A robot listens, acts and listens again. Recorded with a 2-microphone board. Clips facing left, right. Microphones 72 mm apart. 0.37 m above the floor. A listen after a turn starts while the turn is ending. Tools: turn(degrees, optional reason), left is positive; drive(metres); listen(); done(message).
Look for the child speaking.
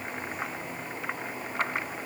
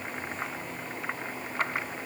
listen()
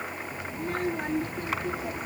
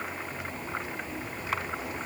turn(degrees=90)
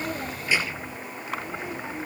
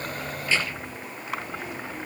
turn(degrees=20, reason="So it is at 20° left.")
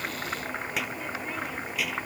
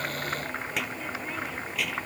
done("Facing the child speaking.")